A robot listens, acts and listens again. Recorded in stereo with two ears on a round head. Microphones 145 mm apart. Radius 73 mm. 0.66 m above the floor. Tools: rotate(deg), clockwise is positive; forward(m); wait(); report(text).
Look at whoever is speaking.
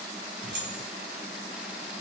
wait()
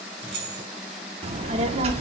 rotate(40)
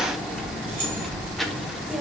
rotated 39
report("Facing the child speaking, under 1 m away.")